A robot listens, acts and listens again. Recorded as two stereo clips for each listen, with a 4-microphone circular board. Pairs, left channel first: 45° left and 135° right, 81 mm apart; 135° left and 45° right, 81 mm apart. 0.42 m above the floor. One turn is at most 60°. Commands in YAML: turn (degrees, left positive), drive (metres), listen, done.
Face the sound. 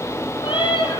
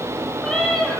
turn: 50
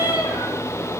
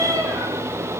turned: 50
done: "Found it: a cat meowing, straight ahead, over 4 m away."